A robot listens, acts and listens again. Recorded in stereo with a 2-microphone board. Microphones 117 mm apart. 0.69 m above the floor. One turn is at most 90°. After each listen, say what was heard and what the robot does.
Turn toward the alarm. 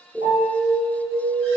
The alarm: about 60° left or 120° left. Turn 60° left.
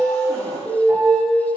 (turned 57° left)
So it is at 20° left. Turn 20° left.
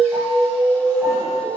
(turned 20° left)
Facing the alarm, 2 to 4 m away.